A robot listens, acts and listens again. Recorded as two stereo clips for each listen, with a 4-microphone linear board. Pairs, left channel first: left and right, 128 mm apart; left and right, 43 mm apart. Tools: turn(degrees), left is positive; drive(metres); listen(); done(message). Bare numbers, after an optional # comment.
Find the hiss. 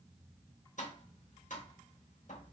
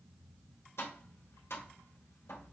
listen()
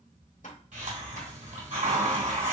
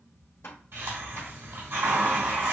turn(-90)
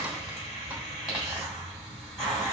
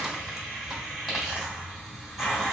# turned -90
done("Facing the hiss, 2 to 4 m away.")